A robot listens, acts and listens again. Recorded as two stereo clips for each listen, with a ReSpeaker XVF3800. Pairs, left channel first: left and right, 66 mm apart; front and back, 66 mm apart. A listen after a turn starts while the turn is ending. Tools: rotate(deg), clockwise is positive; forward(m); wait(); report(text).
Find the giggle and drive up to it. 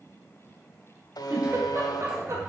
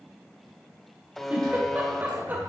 rotate(120)
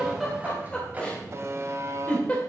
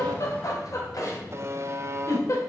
rotate(-20)
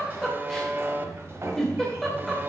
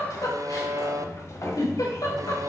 forward(1.0)
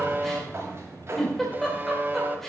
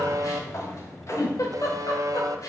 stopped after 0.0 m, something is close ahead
report("Something is in my way. I am facing the giggle but have not reached it.")